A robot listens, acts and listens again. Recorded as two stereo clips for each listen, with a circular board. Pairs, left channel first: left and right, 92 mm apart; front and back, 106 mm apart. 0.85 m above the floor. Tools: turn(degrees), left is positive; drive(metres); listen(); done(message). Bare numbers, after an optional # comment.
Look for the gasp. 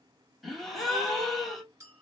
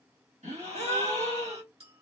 # The gasp: straight behind.
turn(180)
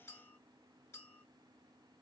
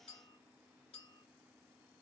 done("I heard a gasp from this way, but can't make it out now.")